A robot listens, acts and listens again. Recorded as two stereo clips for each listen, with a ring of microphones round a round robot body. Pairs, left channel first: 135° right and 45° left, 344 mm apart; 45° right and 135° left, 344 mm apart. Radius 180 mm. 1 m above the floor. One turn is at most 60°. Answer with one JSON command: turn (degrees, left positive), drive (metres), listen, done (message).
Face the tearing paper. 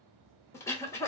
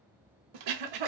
{"listen": true}
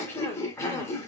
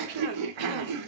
{"listen": true}
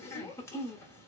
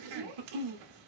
{"done": "I can't make out tearing paper to turn to."}